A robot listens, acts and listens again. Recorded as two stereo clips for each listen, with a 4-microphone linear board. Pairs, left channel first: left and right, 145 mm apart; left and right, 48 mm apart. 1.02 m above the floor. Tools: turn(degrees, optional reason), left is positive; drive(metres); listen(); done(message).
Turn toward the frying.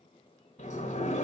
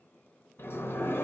listen()
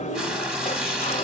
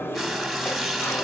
turn(degrees=-30)
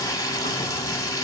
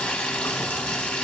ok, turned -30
turn(degrees=20, reason="So it is at 20° left.")
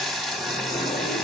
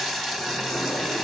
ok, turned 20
done("Facing the frying, under 1 m away.")